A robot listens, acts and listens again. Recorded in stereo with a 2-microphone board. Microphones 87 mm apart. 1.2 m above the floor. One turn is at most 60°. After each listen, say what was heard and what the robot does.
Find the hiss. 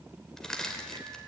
Keep listening.
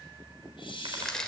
The hiss: about 70° left or 110° left. Turn 60° left.
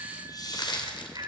So it is at 50° left. Turn 50° left.
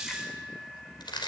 Facing the hiss.